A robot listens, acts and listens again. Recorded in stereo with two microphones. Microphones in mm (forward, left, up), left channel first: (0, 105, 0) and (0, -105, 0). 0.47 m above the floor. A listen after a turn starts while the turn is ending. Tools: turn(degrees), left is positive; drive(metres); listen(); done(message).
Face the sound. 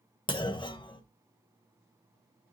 turn(degrees=20)
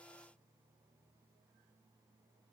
listen()
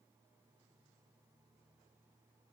done("I heard a clunk, but can't make it out now. It was about straight ahead or 140° left.")